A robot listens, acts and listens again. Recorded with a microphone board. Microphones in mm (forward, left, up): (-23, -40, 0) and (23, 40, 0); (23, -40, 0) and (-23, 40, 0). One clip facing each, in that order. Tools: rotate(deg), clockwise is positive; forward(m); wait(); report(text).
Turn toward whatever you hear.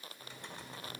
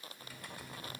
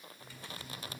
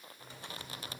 rotate(-180)
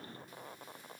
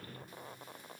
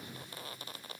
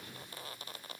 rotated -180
wait()
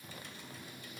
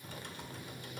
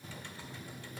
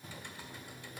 rotate(-50)
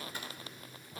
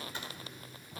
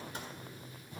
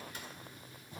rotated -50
report("Found it: typing on a keyboard, straight ahead.")